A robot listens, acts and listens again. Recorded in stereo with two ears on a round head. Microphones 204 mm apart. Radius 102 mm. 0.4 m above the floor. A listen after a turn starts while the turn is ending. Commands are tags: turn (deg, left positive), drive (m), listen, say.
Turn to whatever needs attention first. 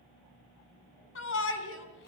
<turn deg="65"/>
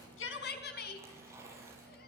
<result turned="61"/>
<turn deg="50"/>
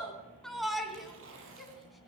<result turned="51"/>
<say>Found it: a shout, straight ahead, 2 to 4 m away.</say>